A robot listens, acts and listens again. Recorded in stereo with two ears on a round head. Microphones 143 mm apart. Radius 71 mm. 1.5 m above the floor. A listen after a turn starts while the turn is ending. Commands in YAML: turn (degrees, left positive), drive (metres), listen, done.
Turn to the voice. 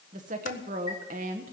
turn: -50
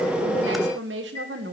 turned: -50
turn: -80
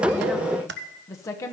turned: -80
turn: 20
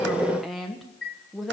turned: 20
done: "Facing the woman speaking."